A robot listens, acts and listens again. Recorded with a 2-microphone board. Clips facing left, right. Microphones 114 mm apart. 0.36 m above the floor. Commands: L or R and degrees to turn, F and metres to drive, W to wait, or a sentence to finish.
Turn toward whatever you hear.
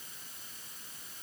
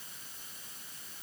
W
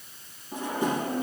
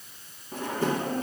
L15
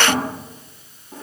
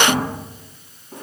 Facing the drawer, 2 to 4 m away.